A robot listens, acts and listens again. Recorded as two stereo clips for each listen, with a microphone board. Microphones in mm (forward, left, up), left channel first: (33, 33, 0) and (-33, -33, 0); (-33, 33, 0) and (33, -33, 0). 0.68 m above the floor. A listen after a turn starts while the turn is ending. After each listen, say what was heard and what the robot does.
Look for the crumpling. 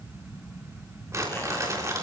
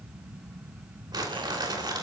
The crumpling: 80° right. Turn 80° right.
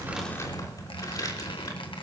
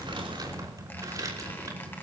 Keep listening.
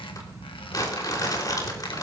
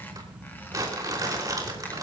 Facing the crumpling, 2 to 4 m away.